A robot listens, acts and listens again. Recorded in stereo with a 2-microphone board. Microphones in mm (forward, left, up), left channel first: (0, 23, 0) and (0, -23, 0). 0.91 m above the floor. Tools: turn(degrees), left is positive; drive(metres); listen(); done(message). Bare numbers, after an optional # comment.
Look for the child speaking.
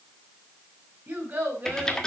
# The child speaking: about 40° right or 140° right.
turn(-40)
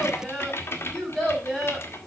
done("Found it: a child speaking, straight ahead.")